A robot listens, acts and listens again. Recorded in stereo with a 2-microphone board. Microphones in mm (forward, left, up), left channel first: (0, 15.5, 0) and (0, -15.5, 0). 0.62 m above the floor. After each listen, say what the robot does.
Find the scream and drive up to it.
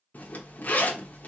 Keep listening.
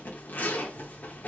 Keep listening.
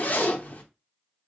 I can't make out a scream, only a zipper.